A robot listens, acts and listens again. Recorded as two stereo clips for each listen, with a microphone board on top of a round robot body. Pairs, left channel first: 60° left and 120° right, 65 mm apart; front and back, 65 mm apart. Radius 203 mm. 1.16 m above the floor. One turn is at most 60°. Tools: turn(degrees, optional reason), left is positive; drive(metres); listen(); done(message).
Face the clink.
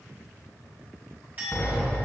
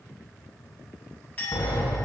turn(degrees=-60, reason="The clink: 60° right.")
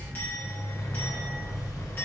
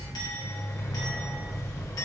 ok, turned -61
done("Facing the clink, 1 to 2 m away.")